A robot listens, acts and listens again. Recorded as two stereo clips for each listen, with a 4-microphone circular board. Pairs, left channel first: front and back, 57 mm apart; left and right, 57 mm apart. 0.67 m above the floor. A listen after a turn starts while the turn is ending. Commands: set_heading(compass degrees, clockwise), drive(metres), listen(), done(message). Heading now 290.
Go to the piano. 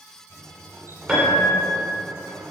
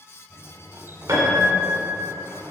set_heading(30)
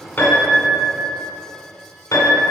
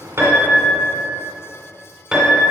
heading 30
set_heading(40)
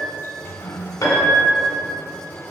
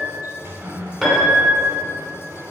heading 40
drive(1.0)
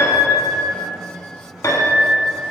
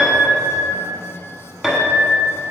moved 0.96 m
drive(1.0)
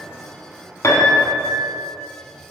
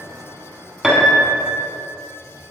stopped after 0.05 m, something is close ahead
done("I am next to the piano.")